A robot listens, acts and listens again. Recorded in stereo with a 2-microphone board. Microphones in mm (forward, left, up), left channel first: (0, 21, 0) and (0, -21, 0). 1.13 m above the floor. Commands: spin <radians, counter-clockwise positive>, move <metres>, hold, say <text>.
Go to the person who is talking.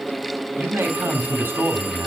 spin -1.57
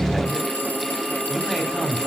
move 1.0
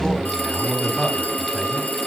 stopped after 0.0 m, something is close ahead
say Something is in my way. I am facing the man speaking but have not reached it.